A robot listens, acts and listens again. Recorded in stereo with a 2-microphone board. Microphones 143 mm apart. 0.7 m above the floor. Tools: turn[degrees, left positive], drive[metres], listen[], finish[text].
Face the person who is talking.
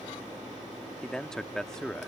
Action: turn[30]
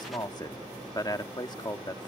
Thought: So it is at 145° left.
Action: turn[145]
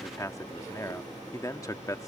Thought: The man speaking is now 30° left.
Action: turn[30]
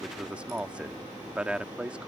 Thought: The man speaking is now 10° right.
Action: turn[-10]
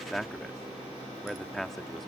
Action: finish[Facing the man speaking.]